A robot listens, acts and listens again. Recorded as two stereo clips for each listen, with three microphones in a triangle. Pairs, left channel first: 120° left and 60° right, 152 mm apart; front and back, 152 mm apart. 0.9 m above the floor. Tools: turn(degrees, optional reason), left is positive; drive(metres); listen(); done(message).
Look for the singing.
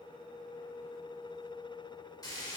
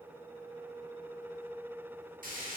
listen()
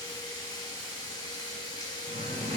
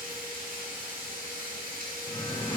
turn(degrees=-55, reason="The singing: 55° right.")
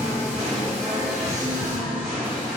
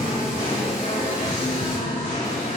turn(degrees=25, reason="The singing is now 25° left.")
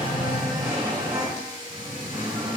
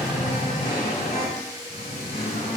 done("Found it: singing, straight ahead.")